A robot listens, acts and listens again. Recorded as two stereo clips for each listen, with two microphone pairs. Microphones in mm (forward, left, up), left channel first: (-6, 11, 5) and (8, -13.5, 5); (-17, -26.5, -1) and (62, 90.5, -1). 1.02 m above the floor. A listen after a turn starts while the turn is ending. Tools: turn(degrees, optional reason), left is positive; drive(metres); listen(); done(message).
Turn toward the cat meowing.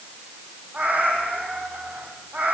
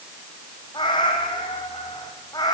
turn(degrees=-60, reason="The cat meowing: 60° right.")
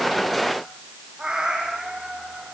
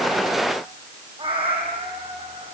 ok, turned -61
turn(degrees=10, reason="The cat meowing is now 10° left.")
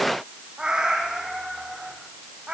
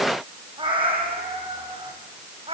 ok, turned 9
turn(degrees=10, reason="The cat meowing is now 10° left.")
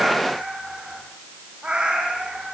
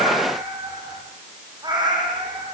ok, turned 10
done("Facing the cat meowing.")